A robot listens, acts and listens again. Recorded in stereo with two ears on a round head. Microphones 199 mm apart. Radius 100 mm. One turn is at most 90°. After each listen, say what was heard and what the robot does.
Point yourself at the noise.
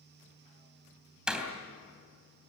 Turn 30° right.
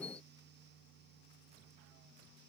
Keep listening.
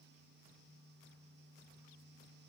I heard a door slam, but can't make it out now. It was about 25° left or 145° right.